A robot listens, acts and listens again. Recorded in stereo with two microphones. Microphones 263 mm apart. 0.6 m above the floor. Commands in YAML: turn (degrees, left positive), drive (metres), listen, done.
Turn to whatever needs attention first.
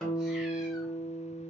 listen: true
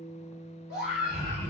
turn: -35
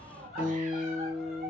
done: "Found it: a scream, straight ahead, 1 to 2 m away."